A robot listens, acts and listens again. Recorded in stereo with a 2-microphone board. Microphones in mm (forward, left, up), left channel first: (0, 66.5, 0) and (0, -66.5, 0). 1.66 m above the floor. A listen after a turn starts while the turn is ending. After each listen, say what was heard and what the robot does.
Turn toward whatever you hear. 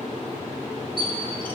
The bird: about 40° right or 140° right. Turn 40° right.
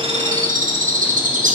So it is at 105° right. Turn 105° right.
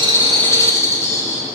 The bird is now 20° left. Turn 20° left.
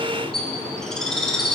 Found it: a bird, straight ahead, 1 to 2 m away.